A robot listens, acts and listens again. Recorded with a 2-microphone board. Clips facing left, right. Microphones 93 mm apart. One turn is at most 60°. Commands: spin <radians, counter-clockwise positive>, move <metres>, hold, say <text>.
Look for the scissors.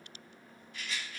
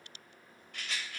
hold
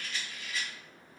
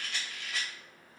hold
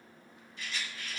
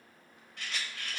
say I can't make out scissors, only a rattle.